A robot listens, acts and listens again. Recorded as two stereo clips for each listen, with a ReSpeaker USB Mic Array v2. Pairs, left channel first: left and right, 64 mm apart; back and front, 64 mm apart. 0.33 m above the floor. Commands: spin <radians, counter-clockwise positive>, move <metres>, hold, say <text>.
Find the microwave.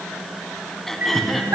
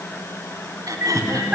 spin -0.61
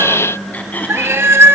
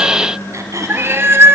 spin -0.17
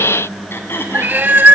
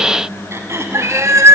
say Found it: a microwave, straight ahead.